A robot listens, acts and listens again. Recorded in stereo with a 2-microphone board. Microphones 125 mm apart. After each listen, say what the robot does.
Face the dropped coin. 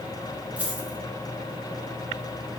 Turn 30° right.
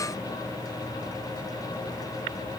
Keep listening.
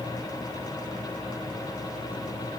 I heard a dropped coin, but can't make it out now. It was about 20° left or 140° right.